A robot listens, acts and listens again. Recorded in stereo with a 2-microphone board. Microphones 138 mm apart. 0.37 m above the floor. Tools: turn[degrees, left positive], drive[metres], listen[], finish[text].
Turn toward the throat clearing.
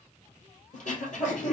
Thought: The throat clearing: about 65° left or 115° left.
Action: turn[65]
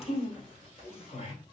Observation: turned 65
Thought: So it is at 45° left.
Action: turn[45]
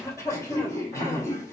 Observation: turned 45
Thought: The throat clearing is now 25° left.
Action: turn[25]
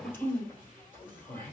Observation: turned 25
Thought: The throat clearing is now 15° left.
Action: turn[15]
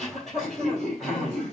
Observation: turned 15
Action: finish[Facing the throat clearing.]